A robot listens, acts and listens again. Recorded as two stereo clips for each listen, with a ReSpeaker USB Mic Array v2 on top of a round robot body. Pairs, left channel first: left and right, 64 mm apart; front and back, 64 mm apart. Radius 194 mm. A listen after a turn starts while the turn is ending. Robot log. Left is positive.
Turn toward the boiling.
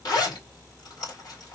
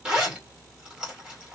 cmd idle
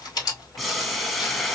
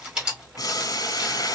end: Found it: boiling, straight ahead, 1 to 2 m away.